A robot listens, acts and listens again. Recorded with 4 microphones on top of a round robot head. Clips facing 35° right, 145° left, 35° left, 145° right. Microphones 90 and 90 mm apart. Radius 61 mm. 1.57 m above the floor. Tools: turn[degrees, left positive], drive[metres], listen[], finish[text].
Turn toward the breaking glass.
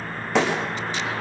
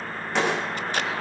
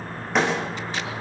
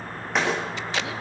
Thought: The breaking glass: 55° right.
Action: turn[-55]
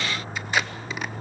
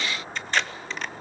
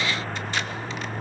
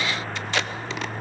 Action: finish[I heard breaking glass from this way, but can't make it out now.]